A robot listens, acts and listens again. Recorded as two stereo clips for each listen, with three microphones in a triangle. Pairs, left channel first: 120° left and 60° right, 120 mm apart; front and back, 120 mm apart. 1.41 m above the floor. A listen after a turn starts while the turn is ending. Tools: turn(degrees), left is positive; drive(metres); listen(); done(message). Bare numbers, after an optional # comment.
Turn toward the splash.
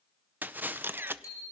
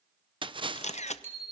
# The splash: 135° right.
turn(-135)
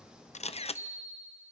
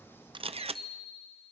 done("Facing where the splash came from. I can't hear it now.")